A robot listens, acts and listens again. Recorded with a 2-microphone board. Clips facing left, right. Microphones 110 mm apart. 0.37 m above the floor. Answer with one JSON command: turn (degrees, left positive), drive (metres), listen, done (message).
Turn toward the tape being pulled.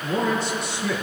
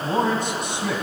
{"listen": true}
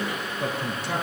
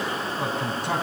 {"listen": true}
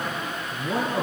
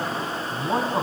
{"done": "I can't make out tape being pulled to turn to."}